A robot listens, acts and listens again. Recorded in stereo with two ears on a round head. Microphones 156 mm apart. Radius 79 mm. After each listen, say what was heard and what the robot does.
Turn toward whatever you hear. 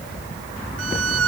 Turn 90° right.
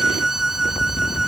Found it: a violin, straight ahead.